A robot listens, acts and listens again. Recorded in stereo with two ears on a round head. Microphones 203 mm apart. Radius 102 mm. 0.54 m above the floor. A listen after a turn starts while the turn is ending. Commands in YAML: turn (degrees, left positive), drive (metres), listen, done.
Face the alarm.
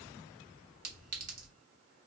listen: true
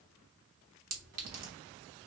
listen: true
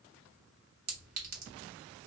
done: "I can't make out an alarm, only a clink."